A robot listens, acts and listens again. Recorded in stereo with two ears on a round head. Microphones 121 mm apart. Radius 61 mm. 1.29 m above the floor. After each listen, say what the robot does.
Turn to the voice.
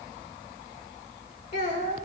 Turn 55° left.
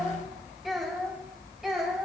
Facing the child speaking.